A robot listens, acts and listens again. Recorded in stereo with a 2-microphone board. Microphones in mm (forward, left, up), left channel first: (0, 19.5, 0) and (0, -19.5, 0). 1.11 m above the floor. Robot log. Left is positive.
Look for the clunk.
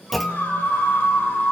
cmd yaw +30
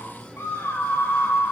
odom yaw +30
cmd idle
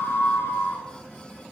end: I heard a clunk, but can't make it out now. It was about 25° right or 145° left.